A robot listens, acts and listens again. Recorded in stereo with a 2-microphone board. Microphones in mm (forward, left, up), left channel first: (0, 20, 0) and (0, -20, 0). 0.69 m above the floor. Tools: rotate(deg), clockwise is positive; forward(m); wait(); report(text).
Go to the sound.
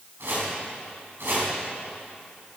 rotate(75)
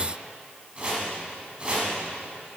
rotate(30)
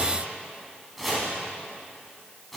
forward(1.0)
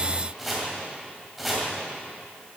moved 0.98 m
forward(1.0)
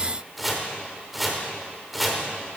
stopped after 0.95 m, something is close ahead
report("I am next to the chopping.")